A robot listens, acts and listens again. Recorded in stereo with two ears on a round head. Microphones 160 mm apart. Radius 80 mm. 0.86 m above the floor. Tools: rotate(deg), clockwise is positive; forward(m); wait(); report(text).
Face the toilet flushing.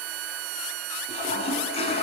rotate(-35)
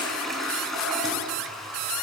report("Found it: a toilet flushing, straight ahead.")